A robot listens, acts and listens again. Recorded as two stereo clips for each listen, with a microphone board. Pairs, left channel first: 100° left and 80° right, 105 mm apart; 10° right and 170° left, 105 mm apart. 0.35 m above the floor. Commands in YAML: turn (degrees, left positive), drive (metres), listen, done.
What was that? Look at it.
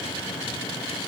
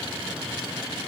listen: true
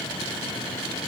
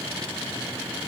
listen: true
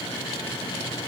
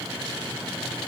done: "I can't make out anything."